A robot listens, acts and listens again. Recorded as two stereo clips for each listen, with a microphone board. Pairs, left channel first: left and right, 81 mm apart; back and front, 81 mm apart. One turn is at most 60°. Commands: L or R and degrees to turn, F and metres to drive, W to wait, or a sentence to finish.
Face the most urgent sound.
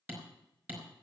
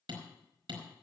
W
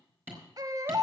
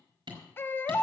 R60
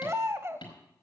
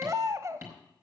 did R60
R40
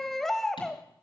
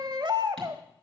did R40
Facing the baby crying, under 1 m away.